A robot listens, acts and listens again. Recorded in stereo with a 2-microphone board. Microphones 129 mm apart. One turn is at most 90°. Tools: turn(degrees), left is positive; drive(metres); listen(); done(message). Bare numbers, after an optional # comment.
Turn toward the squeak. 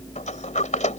listen()
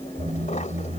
# The squeak: about 65° right or 115° right.
turn(-65)
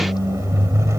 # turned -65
# So it is at 25° right.
turn(-25)
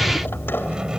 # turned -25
done("Facing the squeak.")